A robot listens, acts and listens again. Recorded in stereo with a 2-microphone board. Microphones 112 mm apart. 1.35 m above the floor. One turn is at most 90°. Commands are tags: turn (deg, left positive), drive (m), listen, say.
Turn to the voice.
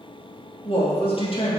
<turn deg="55"/>
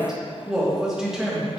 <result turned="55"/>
<say>Found it: a woman speaking, straight ahead.</say>